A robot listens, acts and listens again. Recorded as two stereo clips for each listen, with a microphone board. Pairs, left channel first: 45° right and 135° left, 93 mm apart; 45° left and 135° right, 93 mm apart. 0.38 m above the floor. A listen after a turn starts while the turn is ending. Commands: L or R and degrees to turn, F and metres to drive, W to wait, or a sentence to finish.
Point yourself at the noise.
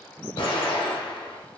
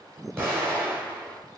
R70
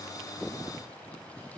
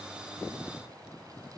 I heard an explosion from this way, but can't make it out now.